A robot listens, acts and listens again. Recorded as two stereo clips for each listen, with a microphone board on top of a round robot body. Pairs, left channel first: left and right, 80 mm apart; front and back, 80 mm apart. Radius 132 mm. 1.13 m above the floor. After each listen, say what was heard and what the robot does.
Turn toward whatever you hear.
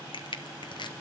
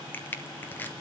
The crushing: 70° left. Turn 70° left.
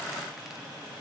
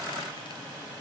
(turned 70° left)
Keep listening.
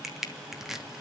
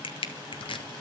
Facing the crushing.